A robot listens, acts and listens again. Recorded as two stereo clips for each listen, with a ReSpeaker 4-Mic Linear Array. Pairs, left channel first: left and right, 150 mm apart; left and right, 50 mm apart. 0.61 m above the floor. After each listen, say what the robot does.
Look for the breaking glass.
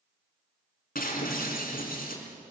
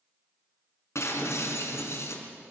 Turn 70° left.
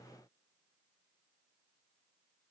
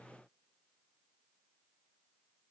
Keep listening.
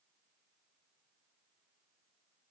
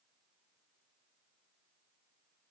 I heard breaking glass, but can't make it out now. It was about straight ahead or 40° left.